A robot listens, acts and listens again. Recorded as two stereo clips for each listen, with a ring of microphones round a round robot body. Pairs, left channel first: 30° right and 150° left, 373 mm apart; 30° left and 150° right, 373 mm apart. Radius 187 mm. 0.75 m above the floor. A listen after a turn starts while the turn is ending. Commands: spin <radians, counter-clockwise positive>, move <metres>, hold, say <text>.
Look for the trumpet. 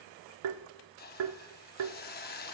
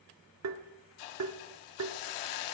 hold
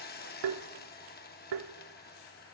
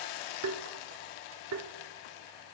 hold
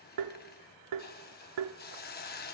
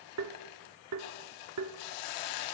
say I can't make out a trumpet, only a hiss and tapping.